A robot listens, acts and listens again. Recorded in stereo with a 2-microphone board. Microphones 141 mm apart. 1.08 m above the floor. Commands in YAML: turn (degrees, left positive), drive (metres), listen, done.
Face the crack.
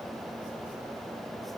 listen: true
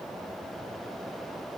listen: true
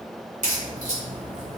turn: -60
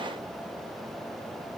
listen: true
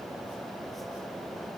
done: "I heard a crack, but can't make it out now. It was about straight ahead or 60° right."